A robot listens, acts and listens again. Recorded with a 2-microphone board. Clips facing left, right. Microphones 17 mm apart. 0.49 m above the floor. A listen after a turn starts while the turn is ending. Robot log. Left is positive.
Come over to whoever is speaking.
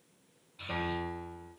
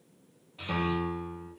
note: The child speaking: about 75° right or 105° right.
cmd yaw -75
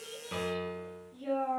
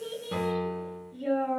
note: So it is at 10° right.
cmd yaw -10
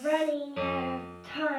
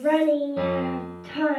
cmd fwd 1.0
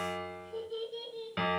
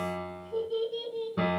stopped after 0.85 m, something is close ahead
end: I am next to the child speaking.